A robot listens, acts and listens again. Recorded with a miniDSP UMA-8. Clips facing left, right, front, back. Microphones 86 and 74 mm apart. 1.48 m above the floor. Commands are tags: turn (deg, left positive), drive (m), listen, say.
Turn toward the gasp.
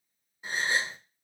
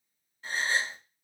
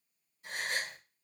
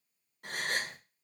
<turn deg="165"/>
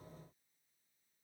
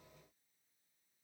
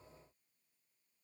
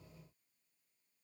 <say>I heard a gasp from this way, but can't make it out now.</say>